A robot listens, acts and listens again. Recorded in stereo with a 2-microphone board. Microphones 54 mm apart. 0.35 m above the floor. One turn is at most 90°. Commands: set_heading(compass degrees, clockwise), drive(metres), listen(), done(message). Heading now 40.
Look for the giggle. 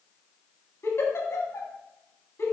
set_heading(345)
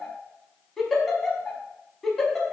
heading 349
done("Facing the giggle.")